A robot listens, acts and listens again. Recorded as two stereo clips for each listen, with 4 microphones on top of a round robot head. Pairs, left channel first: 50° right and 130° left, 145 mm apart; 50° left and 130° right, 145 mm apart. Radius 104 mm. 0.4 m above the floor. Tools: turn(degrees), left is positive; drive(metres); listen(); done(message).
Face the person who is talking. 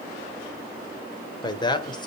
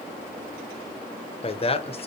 done("Found it: a man speaking, straight ahead, 1 to 2 m away.")